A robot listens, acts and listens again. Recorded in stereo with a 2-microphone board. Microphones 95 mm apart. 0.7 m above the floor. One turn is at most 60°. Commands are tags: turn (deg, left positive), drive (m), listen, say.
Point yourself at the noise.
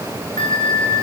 <turn deg="60"/>
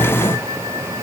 <listen/>
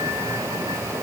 <listen/>
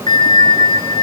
<turn deg="55"/>
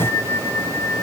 <turn deg="20"/>
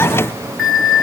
<say>Found it: a bell, straight ahead.</say>